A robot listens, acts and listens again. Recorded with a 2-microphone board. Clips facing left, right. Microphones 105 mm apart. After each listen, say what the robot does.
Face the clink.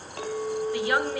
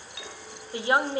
Turn 50° left.
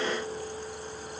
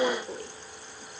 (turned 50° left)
Keep listening.
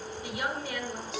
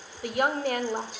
Keep listening.
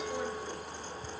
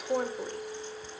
Turn 80° left.
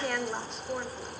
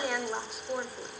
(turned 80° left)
Keep listening.
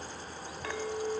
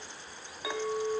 Turn 10° right.
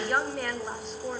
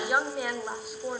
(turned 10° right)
Keep listening.
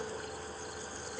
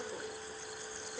Keep listening.
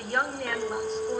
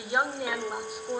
Found it: a clink, straight ahead.